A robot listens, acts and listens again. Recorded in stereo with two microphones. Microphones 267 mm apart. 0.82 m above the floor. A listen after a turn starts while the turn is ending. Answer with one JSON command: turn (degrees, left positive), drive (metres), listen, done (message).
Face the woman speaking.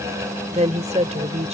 {"turn": -25}
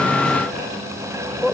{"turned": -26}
{"done": "Facing the woman speaking."}